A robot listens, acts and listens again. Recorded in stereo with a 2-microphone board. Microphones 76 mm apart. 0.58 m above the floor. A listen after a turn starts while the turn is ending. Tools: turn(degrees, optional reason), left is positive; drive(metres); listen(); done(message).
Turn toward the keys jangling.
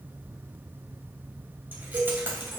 turn(degrees=-30, reason="The keys jangling: about 30° right or 150° right.")
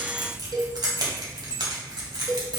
turn(degrees=-105, reason="So it is at 105° right.")
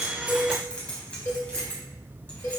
turn(degrees=15, reason="The keys jangling is now 15° left.")
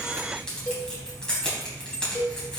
turn(degrees=10, reason="The keys jangling is now 10° left.")
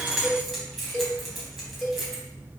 done("Found it: keys jangling, straight ahead, 2 to 4 m away.")